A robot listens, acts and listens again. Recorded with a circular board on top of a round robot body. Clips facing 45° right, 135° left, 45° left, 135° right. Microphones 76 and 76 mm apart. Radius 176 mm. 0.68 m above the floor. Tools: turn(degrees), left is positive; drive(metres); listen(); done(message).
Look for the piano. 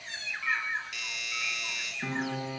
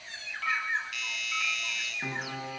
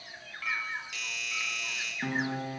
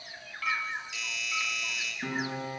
turn(degrees=65)
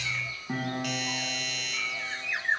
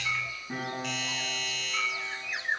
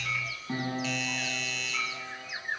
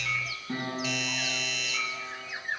turn(degrees=-10)
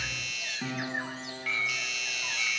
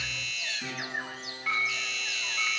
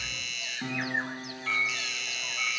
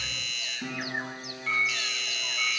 done("Found it: a piano, straight ahead, over 4 m away.")